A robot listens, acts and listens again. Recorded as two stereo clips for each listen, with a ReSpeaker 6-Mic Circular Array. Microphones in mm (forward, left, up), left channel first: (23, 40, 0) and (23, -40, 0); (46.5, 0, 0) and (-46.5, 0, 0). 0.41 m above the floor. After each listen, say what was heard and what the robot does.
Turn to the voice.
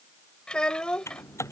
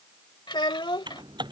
The child speaking: 10° left. Turn 10° left.
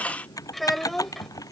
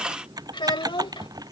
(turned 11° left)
Found it: a child speaking, straight ahead.